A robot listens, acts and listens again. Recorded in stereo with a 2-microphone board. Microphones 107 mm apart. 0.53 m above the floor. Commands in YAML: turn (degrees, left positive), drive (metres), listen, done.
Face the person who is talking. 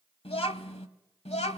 turn: 90
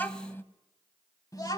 turn: 35
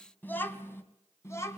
turn: 25
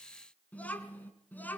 turn: 15
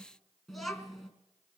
done: "Found it: a child speaking, straight ahead, 2 to 4 m away."